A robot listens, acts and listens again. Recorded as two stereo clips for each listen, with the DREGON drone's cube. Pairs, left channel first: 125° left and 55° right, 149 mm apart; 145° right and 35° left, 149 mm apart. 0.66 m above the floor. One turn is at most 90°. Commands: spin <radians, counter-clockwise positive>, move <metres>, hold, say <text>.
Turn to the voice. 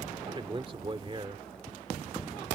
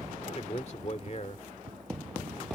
spin -1.57
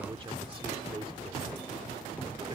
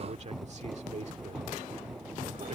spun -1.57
say Facing the man speaking.